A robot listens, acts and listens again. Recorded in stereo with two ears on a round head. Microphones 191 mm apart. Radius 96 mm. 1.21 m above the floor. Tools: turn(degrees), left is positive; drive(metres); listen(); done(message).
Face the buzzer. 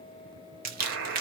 turn(degrees=-70)
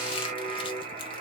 turn(degrees=-35)
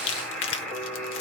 done("Facing the buzzer.")